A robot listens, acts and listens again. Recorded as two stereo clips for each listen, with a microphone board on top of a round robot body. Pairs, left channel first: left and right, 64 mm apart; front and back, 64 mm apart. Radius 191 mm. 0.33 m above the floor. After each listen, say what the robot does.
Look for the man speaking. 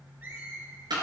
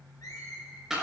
Keep listening.
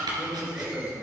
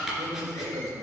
Turn 155° right.
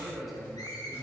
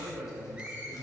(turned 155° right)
Facing the man speaking, 2 to 4 m away.